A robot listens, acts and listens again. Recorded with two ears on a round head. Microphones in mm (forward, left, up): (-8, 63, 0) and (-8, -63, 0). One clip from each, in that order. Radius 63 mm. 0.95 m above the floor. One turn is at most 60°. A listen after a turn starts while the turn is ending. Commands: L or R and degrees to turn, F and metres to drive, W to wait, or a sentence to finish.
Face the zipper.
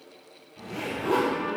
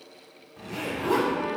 R45
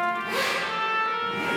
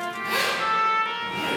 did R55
R60
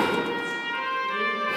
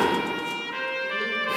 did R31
R45
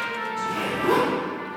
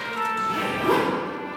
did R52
Found it: a zipper, straight ahead.